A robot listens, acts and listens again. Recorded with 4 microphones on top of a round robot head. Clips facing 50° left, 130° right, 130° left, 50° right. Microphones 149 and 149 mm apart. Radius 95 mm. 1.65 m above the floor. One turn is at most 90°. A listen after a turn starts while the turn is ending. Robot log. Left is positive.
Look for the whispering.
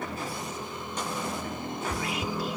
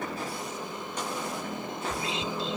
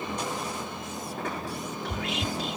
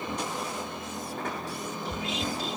note: The whispering: 165° left.
cmd yaw +90
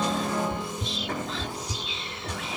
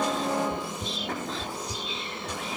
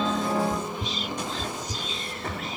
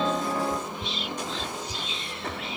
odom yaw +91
note: The whispering is now 75° left.
cmd yaw +75
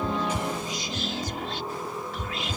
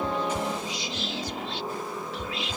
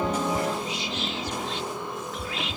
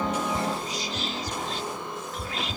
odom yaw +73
end: Facing the whispering.